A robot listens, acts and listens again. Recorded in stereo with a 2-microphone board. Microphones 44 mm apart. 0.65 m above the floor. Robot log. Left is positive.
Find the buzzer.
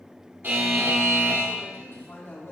note: The buzzer: about 50° right or 130° right.
cmd yaw -50
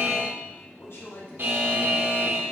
note: So it is at 65° right.
cmd yaw -65
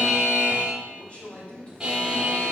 note: The buzzer is now 20° right.
cmd yaw -20
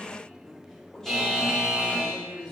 end: Found it: a buzzer, straight ahead, 2 to 4 m away.